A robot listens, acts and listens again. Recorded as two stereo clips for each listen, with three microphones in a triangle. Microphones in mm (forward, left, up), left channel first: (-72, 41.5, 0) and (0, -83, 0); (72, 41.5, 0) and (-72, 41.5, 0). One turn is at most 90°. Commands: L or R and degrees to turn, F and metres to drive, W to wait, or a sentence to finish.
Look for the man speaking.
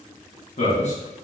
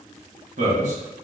L90
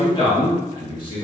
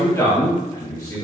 L70
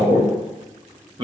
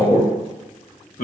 R10
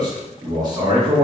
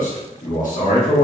Facing the man speaking.